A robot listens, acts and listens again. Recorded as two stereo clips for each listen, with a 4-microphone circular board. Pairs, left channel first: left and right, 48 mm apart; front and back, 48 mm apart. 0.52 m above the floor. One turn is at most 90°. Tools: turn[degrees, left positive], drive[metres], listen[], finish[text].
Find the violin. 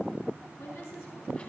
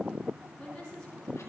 Action: listen[]
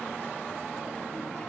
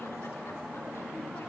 Action: listen[]
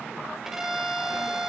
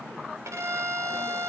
Thought: The violin: 175° right.
Action: turn[-90]
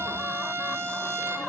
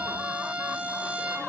Thought: The violin is now 115° right.
Action: turn[-90]
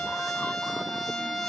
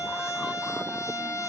Action: finish[Found it: a violin, straight ahead, 1 to 2 m away.]